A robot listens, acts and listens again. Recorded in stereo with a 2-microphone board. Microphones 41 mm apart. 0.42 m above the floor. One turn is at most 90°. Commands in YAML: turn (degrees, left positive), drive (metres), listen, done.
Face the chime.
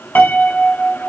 listen: true
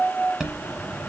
turn: -30
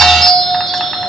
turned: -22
turn: 10
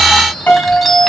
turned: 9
done: "Found it: a chime, straight ahead."